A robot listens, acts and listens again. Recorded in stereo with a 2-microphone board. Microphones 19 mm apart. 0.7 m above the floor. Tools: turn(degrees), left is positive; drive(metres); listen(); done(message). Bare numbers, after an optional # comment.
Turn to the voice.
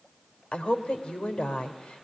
# The woman speaking: about 75° left or 105° left.
turn(75)
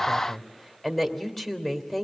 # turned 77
# So it is at 10° left.
turn(10)
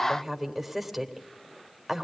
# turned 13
done("Found it: a woman speaking, straight ahead, 2 to 4 m away.")